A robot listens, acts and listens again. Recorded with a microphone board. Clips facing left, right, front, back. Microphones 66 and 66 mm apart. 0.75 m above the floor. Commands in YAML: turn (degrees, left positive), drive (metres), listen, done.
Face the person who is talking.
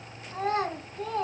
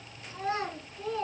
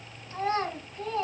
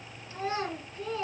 turn: 50
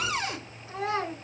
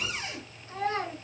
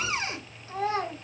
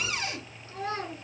done: "Facing the child speaking, 2 to 4 m away."